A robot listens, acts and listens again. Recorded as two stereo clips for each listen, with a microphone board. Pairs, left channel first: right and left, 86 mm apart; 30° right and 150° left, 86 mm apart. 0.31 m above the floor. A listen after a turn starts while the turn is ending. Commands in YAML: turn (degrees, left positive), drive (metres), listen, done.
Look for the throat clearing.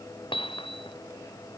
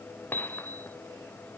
listen: true
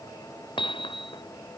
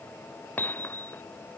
listen: true
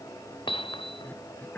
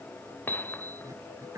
turn: -160
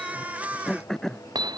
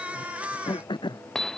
done: "Found it: throat clearing, straight ahead."